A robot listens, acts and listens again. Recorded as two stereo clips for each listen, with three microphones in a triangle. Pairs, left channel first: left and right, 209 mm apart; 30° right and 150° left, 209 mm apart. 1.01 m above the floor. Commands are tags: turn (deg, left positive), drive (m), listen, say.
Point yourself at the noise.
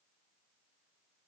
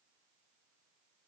<listen/>
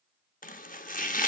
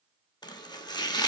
<turn deg="40"/>
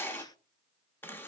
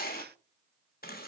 <turn deg="10"/>
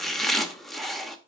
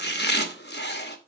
<say>Found it: chopping, straight ahead, under 1 m away.</say>